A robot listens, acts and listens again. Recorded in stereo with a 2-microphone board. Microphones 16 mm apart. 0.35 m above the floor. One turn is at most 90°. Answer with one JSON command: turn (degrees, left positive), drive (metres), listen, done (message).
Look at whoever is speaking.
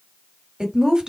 {"turn": -55}
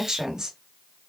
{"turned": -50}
{"turn": -50}
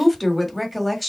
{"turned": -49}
{"done": "Found it: a woman speaking, straight ahead."}